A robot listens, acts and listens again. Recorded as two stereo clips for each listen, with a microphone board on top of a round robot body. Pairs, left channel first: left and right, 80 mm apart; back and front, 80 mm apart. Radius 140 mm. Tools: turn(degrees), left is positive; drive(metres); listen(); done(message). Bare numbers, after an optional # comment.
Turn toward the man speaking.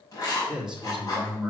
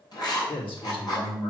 # The man speaking: 175° right.
turn(-175)
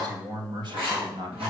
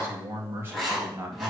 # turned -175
# The man speaking is now 70° right.
turn(-70)
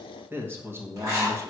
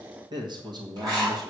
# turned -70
# The man speaking is now 30° right.
turn(-30)
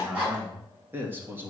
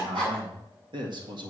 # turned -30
# The man speaking is now 25° right.
turn(-25)
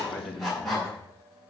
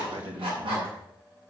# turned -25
done("Found it: a man speaking, straight ahead.")